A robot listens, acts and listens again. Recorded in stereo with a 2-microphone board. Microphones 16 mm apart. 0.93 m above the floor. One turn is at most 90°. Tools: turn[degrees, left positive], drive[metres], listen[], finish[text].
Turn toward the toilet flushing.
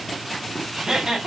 Action: listen[]
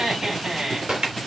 Action: turn[-90]
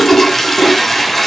Thought: So it is at 10° left.
Action: turn[10]
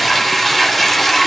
Action: finish[Facing the toilet flushing, 2 to 4 m away.]